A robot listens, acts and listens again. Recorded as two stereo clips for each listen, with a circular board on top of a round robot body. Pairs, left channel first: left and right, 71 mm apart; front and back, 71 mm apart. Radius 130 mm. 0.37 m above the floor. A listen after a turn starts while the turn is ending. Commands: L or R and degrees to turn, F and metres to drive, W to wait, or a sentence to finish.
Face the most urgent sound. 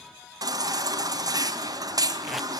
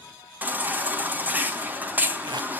R115
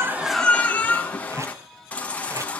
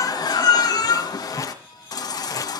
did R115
L20
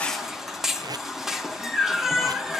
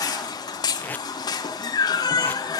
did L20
Facing the baby crying, 2 to 4 m away.